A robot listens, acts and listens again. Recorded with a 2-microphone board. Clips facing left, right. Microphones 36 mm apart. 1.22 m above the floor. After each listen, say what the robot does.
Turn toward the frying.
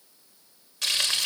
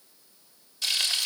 Turn 90° left.
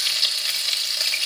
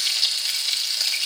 Turn 10° left.
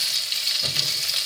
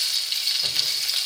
Facing the frying, over 4 m away.